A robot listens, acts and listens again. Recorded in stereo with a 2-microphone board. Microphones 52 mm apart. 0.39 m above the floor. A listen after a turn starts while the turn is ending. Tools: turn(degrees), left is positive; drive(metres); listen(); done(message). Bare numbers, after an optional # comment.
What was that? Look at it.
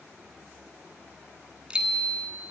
turn(-30)
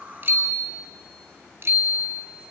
# So it is at 135° right.
turn(-135)
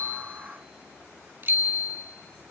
# The bicycle bell is now 45° right.
turn(-45)
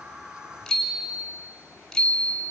done("Facing the bicycle bell.")